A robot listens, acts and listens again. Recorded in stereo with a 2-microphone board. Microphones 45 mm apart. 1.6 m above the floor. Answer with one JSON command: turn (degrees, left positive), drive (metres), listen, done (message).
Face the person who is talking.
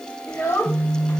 {"turn": 70}
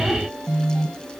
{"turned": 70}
{"listen": true}
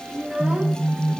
{"turn": -30}
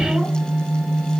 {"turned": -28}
{"listen": true}
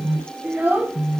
{"turn": -50}
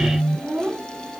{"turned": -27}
{"turn": -35}
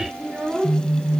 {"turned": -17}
{"turn": -20}
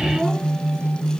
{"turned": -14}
{"listen": true}
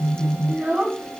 {"done": "Facing the child speaking."}